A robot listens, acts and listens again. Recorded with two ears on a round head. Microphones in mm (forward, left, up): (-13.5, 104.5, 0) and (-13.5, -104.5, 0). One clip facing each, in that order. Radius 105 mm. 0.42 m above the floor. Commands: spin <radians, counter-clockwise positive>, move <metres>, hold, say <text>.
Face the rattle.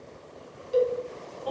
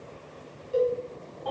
hold
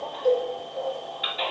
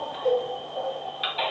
hold
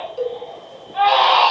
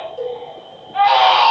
say I can't make out a rattle to turn to.